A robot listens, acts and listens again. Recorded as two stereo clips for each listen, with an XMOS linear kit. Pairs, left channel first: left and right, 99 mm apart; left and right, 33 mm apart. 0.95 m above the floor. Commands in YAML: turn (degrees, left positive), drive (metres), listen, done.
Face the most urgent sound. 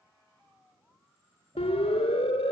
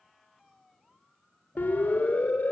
turn: 90
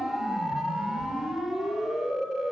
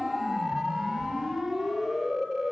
done: "Facing the siren."